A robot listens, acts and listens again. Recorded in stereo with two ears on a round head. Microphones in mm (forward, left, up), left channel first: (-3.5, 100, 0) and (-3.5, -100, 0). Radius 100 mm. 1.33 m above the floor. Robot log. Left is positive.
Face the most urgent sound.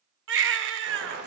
note: The baby crying: about 55° right or 125° right.
cmd yaw -55
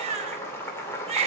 note: So it is at 35° right.
cmd yaw -35
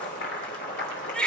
end: Found it: a baby crying, straight ahead.